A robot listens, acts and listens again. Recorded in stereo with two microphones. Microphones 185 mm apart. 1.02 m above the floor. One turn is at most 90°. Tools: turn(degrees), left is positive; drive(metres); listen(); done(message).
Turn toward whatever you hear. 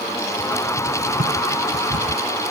turn(degrees=-50)
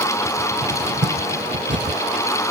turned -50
turn(degrees=-80)
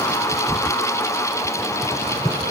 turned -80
turn(degrees=15)
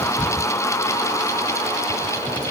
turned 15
done("Found it: a cupboard door, straight ahead.")